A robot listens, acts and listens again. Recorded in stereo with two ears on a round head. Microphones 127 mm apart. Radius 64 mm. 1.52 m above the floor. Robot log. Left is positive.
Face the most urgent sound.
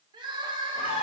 note: The crying: about 35° right or 145° right.
cmd yaw -35
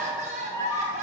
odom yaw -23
note: So it is at 120° right.
cmd yaw -120
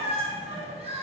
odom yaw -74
note: The crying is now 45° right.
cmd yaw -45
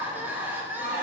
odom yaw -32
note: The crying is now 15° right.
cmd yaw -15
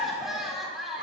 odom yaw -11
end: Found it: crying, straight ahead.